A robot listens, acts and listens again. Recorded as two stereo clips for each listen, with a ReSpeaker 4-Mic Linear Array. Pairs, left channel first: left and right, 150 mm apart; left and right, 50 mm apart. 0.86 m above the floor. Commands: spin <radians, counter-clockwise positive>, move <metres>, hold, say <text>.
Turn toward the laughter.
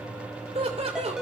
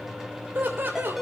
spin -0.70
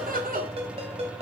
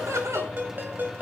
spin -1.83
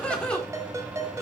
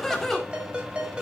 say Facing the laughter, 2 to 4 m away.